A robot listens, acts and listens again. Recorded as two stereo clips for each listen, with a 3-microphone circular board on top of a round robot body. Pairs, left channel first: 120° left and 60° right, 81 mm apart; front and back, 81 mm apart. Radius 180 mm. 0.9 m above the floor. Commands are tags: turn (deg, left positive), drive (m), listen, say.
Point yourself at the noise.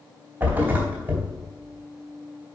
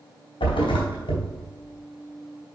<turn deg="10"/>
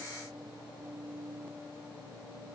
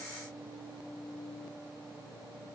<say>Facing where the thud came from. I can't hear it now.</say>